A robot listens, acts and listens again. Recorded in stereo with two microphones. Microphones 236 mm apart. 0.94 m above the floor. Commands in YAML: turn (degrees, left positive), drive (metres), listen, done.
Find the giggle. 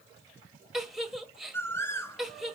turn: 30
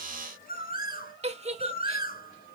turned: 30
turn: -30
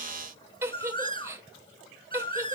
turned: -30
turn: -15
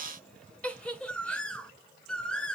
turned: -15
done: "Facing the giggle, 1 to 2 m away."